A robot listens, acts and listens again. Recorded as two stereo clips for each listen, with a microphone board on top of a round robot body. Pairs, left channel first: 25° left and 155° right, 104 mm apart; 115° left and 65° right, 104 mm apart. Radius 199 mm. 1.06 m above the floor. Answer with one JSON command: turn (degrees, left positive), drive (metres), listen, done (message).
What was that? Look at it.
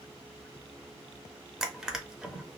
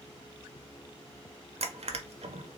{"turn": -75}
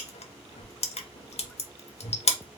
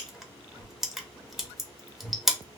{"turn": 20}
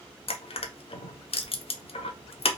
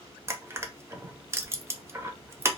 {"done": "Facing the crushing, under 1 m away."}